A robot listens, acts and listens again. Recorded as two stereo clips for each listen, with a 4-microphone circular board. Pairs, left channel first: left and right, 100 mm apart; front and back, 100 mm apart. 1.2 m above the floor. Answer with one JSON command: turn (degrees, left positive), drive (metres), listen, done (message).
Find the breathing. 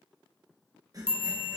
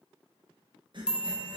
{"turn": -140}
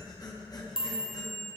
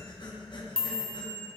{"turn": 40}
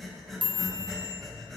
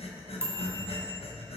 {"done": "Found it: breathing, straight ahead."}